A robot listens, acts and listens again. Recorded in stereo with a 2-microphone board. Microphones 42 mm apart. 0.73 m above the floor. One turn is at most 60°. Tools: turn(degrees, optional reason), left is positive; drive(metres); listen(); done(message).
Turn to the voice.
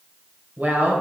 turn(degrees=-40, reason="The woman speaking: about 40° right or 140° right.")
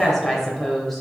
done("Found it: a woman speaking, straight ahead.")